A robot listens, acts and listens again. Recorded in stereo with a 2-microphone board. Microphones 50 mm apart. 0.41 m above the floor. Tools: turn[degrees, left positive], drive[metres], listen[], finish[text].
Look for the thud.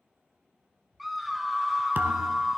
Thought: The thud: about 45° right or 135° right.
Action: turn[-45]
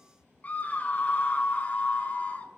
Action: listen[]
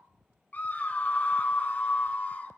Action: finish[I heard a thud, but can't make it out now. It was about straight ahead or 90° right.]